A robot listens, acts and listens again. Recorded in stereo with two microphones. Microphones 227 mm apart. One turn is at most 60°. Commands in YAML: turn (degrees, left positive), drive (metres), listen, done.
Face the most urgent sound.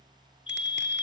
turn: 25
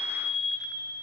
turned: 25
done: "Found it: a fire alarm, straight ahead, 2 to 4 m away."